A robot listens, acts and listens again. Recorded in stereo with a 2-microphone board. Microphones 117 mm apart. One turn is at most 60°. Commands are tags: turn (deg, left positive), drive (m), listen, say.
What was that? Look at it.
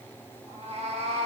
<turn deg="-60"/>
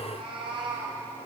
<turn deg="-45"/>
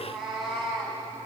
<say>Found it: a cat meowing, straight ahead, over 4 m away.</say>